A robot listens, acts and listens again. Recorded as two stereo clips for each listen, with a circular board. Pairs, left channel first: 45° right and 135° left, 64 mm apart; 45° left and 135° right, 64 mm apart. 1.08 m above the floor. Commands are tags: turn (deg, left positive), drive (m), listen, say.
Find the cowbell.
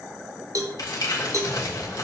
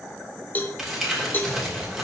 <turn deg="105"/>
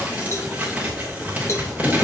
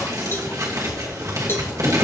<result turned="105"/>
<say>Facing the cowbell, under 1 m away.</say>